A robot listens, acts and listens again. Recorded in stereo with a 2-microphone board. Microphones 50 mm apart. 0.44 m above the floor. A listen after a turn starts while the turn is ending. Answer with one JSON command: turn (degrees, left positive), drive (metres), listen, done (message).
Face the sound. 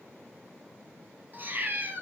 {"turn": -40}
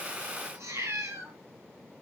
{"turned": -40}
{"turn": -100}
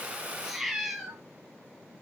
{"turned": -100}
{"done": "Found it: a cat meowing, straight ahead, 1 to 2 m away."}